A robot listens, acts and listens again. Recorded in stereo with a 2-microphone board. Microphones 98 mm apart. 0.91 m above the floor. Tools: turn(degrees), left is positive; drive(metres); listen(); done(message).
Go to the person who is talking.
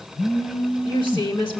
turn(degrees=60)
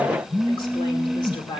turn(degrees=60)
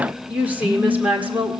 turn(degrees=-15)
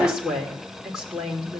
drive(metres=1.0)
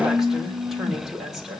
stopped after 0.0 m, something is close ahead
done("Blocked. The woman speaking is further on, straight ahead.")